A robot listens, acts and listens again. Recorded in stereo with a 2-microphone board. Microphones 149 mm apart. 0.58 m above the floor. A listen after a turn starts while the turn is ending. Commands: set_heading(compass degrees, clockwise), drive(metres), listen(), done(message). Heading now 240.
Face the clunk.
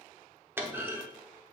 set_heading(270)
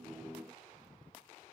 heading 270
listen()
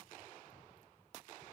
done("I heard a clunk, but can't make it out now. It was about 15° left or 135° right.")